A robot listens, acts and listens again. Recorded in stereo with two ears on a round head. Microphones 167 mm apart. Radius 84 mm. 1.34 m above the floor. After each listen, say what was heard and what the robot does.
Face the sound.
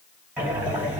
Turn 30° right.
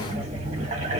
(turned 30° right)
So it is at 140° right. Turn 140° right.
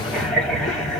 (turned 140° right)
Facing the breathing.